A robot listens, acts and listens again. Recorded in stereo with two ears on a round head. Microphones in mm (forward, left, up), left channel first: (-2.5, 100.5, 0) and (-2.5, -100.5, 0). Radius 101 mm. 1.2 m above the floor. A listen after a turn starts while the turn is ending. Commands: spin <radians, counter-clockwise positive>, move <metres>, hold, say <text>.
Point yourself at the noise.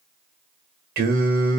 spin -0.79
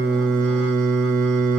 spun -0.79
spin -1.40
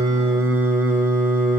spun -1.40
spin -0.17
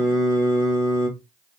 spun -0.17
say Found it: singing, straight ahead, 1 to 2 m away.